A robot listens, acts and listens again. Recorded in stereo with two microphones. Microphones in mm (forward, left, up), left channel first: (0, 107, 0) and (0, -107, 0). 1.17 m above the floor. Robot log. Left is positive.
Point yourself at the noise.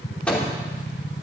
cmd yaw +30
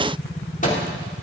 note: So it is at 140° left.
cmd yaw +140
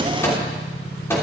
note: The microwave is now 10° left.
cmd yaw +10
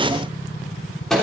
end: Found it: a microwave, straight ahead, 2 to 4 m away.